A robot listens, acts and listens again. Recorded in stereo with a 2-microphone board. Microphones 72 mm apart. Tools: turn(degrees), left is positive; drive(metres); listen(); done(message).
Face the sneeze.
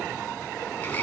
listen()
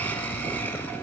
listen()
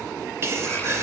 turn(degrees=-35)
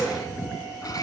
listen()
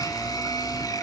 done("I heard a sneeze, but can't make it out now. It was about straight ahead or 110° right.")